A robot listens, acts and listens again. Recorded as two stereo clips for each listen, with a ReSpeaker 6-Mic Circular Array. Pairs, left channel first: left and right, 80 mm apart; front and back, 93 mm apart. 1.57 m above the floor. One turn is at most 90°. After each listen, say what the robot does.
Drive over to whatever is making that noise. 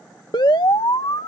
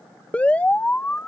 Turn 75° left.
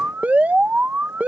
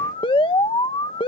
Turn 20° right.
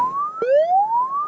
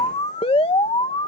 Drive 1.0 m forward.
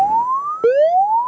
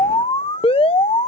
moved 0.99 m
Drive 1.0 m forward.
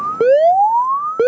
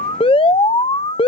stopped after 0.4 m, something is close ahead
Arrived at the alarm, straight ahead.